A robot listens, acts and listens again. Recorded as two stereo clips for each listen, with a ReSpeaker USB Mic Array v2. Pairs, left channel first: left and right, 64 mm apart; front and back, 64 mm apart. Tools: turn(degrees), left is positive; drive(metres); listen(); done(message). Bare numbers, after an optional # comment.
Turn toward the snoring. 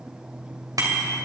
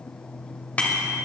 listen()
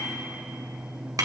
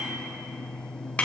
listen()
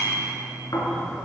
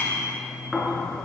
# The snoring: 95° left.
turn(95)
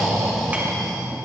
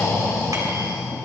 done("Facing the snoring.")